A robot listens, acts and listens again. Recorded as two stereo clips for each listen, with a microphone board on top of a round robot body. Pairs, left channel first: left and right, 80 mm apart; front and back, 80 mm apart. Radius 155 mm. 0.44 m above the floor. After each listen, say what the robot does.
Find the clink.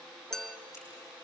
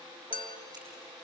Facing the clink.